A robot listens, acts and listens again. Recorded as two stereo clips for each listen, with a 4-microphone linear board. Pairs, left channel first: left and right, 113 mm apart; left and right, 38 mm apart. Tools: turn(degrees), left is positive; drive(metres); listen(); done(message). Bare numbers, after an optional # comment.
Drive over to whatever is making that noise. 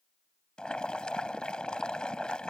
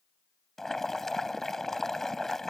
turn(30)
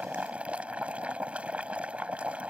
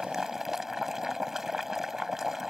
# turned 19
# So it is at 10° right.
turn(-10)
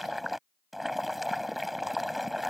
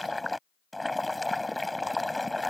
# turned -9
drive(1.0)
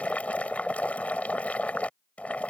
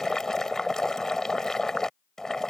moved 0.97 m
# The boiling is now 10° left.
turn(10)
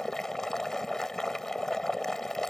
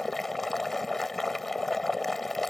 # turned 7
drive(1.0)
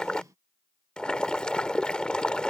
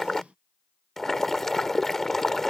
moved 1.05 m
# The boiling is now 10° left.
turn(10)
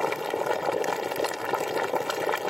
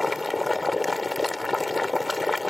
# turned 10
drive(1.0)
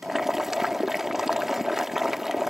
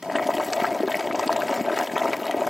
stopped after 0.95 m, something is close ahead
done("I am next to the boiling.")